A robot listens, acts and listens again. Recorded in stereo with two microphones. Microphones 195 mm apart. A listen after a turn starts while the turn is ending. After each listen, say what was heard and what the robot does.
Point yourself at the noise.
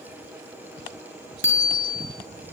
Turn 90° left.
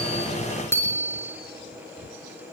So it is at 10° left. Turn 10° left.
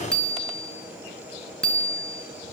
Facing the bicycle bell, over 4 m away.